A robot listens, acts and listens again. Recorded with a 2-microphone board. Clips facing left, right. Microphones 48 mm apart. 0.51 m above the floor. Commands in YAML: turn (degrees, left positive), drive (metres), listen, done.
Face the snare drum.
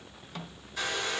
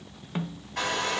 turn: -30
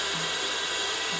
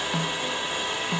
listen: true
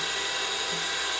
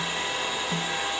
listen: true
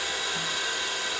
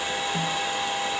done: "I heard a snare drum, but can't make it out now. It was about straight ahead or 120° right."